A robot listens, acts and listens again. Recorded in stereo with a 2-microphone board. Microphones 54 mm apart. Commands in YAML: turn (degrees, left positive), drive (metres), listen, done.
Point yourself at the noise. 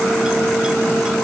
listen: true
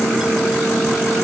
listen: true
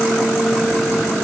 done: "I can't make out anything to turn to."